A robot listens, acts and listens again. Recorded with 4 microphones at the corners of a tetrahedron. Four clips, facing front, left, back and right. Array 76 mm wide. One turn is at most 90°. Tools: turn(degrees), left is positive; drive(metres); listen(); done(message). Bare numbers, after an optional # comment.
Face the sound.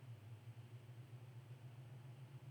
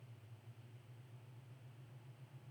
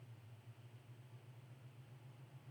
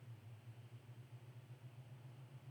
listen()
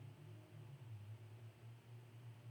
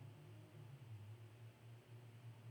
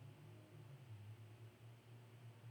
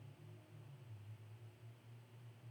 listen()
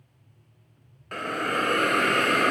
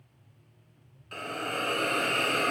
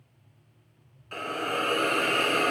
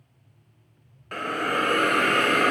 # The hiss: 50° right.
turn(-50)
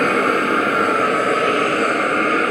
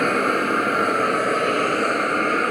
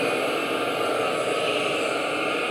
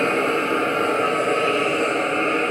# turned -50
# The hiss is now 20° left.
turn(20)
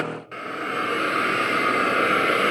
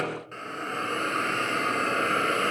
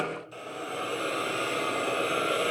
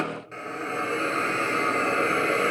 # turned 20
done("Found it: a hiss, straight ahead, 1 to 2 m away.")